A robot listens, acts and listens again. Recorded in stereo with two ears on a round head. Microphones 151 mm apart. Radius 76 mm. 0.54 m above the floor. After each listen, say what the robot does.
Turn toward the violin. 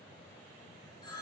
Keep listening.
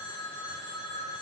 Keep listening.
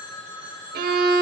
Turn 60° right.
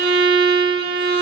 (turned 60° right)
Turn 60° right.
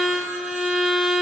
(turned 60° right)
Found it: a violin, straight ahead.